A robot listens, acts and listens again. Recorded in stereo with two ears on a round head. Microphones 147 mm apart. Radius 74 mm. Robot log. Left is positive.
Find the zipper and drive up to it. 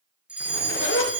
cmd yaw +90
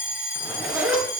cmd fwd 1.0
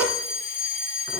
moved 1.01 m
note: The zipper is now 10° right.
cmd yaw -10
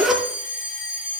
cmd fwd 1.0
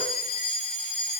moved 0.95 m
cmd idle
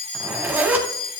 note: The zipper is now 10° right.
cmd yaw -10
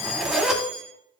cmd fwd 1.0
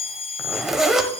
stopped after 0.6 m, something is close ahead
end: Arrived at the zipper, straight ahead.